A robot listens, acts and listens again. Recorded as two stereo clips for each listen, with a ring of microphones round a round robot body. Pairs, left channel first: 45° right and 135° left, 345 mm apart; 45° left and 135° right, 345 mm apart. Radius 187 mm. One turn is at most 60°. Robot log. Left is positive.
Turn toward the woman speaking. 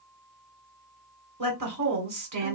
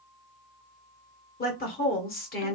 note: The woman speaking: 105° left.
cmd yaw +60
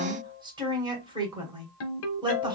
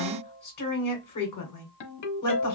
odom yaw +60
note: The woman speaking is now 60° left.
cmd yaw +60
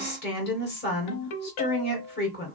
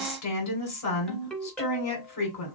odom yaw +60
note: The woman speaking is now 10° left.
cmd yaw +10
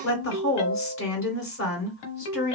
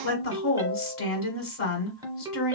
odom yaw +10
end: Facing the woman speaking, 2 to 4 m away.